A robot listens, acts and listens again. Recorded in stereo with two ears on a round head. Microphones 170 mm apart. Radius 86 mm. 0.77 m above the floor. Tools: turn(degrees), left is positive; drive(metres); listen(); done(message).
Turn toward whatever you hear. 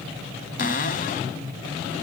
turn(degrees=45)
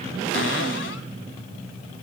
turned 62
listen()
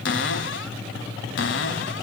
turn(degrees=70)
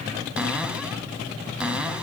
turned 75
done("Found it: a cupboard door, straight ahead, 1 to 2 m away.")